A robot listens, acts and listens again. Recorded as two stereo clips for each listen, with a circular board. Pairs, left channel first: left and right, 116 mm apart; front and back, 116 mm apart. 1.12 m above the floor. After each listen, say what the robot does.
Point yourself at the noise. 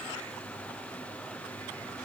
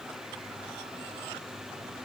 Keep listening.
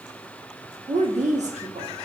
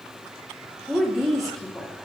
Turn 90° right.
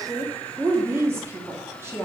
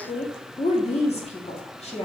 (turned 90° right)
Turn 20° right.
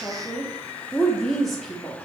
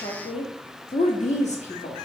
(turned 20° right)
Facing the woman speaking.